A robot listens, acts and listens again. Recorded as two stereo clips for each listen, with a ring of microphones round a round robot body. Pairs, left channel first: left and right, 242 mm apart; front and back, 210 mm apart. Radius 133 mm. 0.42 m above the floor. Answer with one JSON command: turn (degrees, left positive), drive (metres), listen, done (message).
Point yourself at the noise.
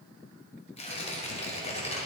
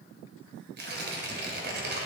{"turn": 150}
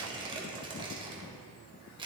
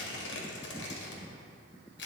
{"turn": -20}
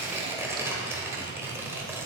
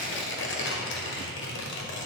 {"turn": -10}
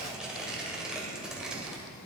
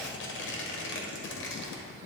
{"done": "Found it: tearing paper, straight ahead, 1 to 2 m away."}